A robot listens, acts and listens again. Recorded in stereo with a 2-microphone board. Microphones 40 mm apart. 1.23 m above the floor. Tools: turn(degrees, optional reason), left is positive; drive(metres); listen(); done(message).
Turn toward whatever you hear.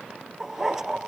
turn(degrees=-30)
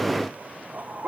turn(degrees=-140, reason="So it is at 140° right.")
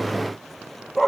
done("Facing the dog barking.")